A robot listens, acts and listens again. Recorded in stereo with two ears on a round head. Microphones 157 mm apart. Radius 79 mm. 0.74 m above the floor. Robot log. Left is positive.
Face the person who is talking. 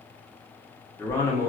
note: The man speaking: about 15° left or 165° left.
cmd yaw +15
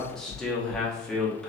end: Facing the man speaking, under 1 m away.